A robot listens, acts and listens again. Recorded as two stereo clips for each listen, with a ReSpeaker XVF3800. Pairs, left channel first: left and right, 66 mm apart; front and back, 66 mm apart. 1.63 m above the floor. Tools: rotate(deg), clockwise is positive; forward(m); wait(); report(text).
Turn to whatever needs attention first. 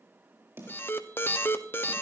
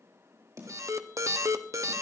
rotate(-145)
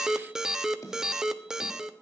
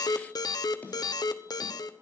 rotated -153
rotate(10)
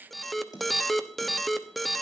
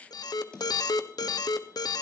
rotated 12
report("Found it: an alarm, straight ahead.")